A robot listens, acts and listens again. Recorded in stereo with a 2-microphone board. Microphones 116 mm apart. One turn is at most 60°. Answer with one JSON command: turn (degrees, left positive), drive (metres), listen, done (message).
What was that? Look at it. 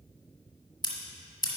{"turn": 40}
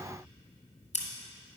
{"turn": 60}
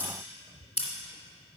{"turn": 60}
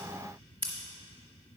{"turn": 15}
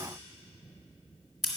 {"done": "Facing the scissors."}